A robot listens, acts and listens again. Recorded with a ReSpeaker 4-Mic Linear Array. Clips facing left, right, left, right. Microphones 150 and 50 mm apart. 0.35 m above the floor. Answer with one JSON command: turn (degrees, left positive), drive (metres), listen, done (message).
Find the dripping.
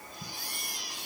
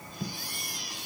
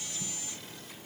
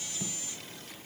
{"listen": true}
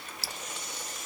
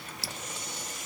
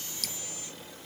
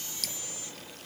{"turn": 30}
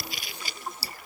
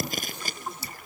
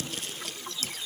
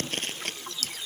{"turn": 145}
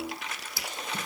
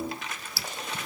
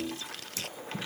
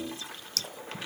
{"turn": 15}
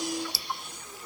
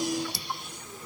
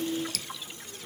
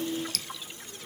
{"done": "Found it: dripping, straight ahead."}